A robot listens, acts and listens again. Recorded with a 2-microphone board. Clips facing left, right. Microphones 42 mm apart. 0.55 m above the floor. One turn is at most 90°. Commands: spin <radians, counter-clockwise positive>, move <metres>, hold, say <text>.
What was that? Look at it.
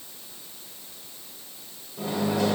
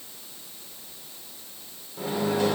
spin -0.52
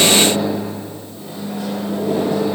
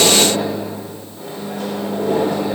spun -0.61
spin -1.57
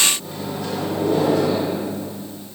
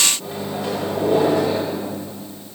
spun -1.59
spin -0.44
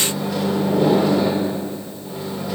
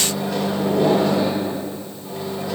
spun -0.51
say Found it: a microwave, straight ahead.